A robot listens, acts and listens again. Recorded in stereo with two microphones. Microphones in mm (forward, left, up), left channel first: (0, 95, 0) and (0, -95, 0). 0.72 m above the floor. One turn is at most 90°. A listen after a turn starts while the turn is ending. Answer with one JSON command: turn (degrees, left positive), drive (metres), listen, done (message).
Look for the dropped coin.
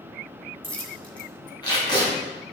{"turn": 30}
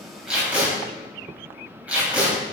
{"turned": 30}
{"listen": true}
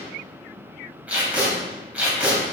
{"done": "I heard a dropped coin, but can't make it out now. It was about 20° right or 140° left."}